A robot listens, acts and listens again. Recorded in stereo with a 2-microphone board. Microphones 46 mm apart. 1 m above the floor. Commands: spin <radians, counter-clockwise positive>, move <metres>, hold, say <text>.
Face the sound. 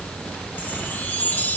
spin 0.61
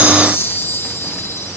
spin 1.83
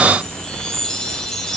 spin 0.26
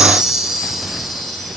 say Facing the chime.